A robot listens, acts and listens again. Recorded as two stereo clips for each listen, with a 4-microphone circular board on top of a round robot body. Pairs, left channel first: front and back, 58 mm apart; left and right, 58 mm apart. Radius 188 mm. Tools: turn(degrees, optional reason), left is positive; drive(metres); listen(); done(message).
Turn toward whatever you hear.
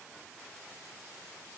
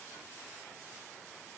listen()
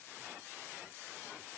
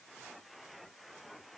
listen()
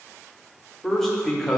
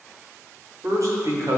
turn(degrees=-85, reason="The man speaking: 85° right.")
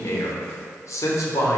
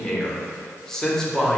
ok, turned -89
turn(degrees=10, reason="The man speaking is now 10° left.")
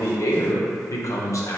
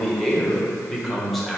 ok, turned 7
done("Found it: a man speaking, straight ahead.")